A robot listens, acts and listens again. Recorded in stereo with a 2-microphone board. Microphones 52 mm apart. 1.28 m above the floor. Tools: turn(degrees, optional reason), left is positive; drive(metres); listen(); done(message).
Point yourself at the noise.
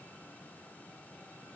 listen()
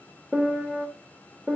turn(degrees=-30)
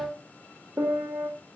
turn(degrees=-140, reason="So it is at 140° right.")
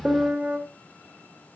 turn(degrees=-15, reason="The piano is now 15° right.")
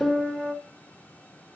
done("Found it: a piano, straight ahead.")